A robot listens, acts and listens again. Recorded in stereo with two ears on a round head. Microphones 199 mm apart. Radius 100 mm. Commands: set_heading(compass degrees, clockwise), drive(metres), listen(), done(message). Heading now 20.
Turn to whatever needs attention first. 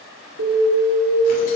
set_heading(110)
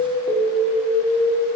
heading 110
done("Facing the alarm, 2 to 4 m away.")